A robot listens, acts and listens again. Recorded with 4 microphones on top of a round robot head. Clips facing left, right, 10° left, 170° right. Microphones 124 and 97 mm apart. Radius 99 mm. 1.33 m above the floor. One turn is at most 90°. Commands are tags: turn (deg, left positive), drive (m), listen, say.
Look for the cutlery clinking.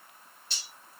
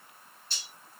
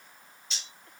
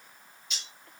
<turn deg="70"/>
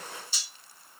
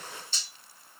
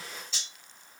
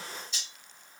<turn deg="10"/>
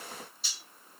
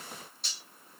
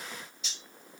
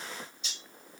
<say>Facing the cutlery clinking.</say>